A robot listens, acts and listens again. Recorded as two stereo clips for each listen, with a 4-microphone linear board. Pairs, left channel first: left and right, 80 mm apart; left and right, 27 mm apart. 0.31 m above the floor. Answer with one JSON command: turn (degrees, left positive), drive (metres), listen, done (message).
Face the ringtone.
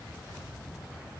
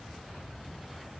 {"listen": true}
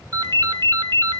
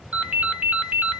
{"turn": -60}
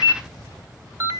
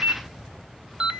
{"turn": -45}
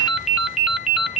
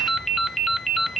{"done": "Found it: a ringtone, straight ahead, under 1 m away."}